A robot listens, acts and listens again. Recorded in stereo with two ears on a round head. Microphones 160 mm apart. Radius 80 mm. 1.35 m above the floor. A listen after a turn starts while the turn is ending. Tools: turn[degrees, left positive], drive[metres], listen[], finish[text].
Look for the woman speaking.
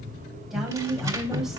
Action: turn[30]
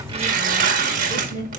Thought: So it is at 155° left.
Action: turn[155]
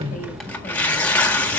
Action: listen[]
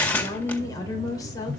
Thought: The woman speaking is now 20° left.
Action: turn[20]
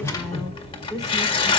Action: finish[Facing the woman speaking, 2 to 4 m away.]